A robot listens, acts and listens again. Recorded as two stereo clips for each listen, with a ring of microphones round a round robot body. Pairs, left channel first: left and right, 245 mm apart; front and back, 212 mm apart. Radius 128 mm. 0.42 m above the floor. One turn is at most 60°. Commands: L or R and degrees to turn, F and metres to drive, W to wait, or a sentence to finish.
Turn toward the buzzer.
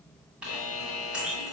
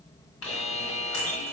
L60
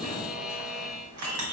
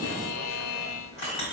Facing the buzzer, under 1 m away.